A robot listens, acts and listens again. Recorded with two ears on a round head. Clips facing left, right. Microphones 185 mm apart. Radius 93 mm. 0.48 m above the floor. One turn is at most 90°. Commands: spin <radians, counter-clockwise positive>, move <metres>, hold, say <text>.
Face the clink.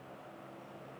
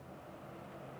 hold
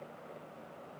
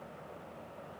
hold
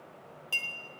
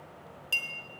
spin -0.26
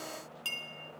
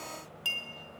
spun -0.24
say Facing the clink, 1 to 2 m away.